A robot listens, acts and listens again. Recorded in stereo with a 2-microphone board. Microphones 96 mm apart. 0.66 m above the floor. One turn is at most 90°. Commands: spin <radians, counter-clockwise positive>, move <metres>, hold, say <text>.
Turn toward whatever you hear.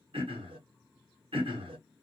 spin -1.57
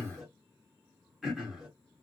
say Facing the throat clearing, 1 to 2 m away.